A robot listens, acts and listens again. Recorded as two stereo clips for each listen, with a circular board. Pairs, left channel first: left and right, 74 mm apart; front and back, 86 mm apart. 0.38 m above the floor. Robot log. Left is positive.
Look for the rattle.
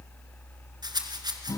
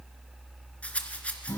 note: The rattle: 75° right.
cmd yaw -75
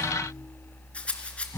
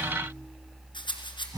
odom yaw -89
note: The rattle is now 15° left.
cmd yaw +15
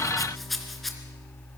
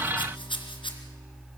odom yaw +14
end: Found it: a rattle, straight ahead.